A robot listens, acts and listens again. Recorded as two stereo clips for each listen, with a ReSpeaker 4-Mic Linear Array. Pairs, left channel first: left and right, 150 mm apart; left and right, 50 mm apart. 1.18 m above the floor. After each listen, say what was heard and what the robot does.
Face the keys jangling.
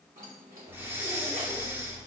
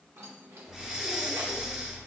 Turn 90° right.
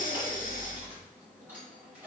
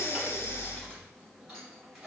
So it is at 10° right. Turn 10° right.
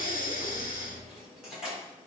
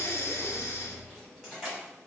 Found it: keys jangling, straight ahead, over 4 m away.